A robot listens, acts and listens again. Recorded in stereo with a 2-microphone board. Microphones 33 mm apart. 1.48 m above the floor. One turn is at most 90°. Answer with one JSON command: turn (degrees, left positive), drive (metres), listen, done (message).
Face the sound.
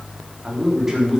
{"turn": -15}
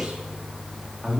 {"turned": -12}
{"turn": -25}
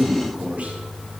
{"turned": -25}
{"turn": -90}
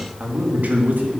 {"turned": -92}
{"turn": -55}
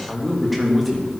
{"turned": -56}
{"done": "Facing the man speaking."}